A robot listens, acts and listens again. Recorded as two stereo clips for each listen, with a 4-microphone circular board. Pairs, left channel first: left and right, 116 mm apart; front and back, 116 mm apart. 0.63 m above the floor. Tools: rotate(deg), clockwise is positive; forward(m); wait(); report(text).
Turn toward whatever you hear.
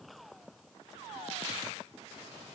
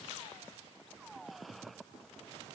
wait()
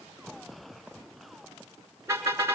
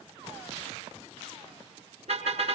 rotate(155)
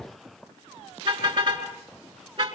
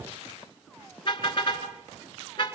rotate(50)
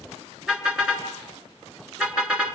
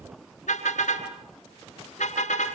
report("Found it: a car horn, straight ahead, over 4 m away.")